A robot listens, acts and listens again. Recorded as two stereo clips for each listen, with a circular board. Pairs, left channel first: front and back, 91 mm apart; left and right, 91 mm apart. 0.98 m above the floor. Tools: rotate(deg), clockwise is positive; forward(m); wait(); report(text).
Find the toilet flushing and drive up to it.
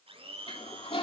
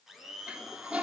rotate(15)
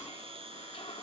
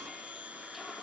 forward(1.0)
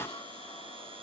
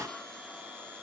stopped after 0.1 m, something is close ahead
report("Blocked. The toilet flushing is further on, straight ahead.")